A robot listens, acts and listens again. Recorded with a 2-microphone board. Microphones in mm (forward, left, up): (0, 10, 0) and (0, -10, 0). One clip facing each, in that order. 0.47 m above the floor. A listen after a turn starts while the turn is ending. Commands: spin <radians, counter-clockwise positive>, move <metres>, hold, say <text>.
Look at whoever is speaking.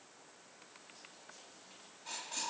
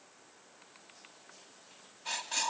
hold
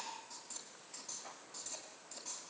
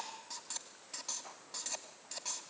hold
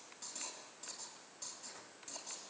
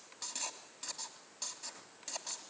say I can't make out anyone speaking to turn to.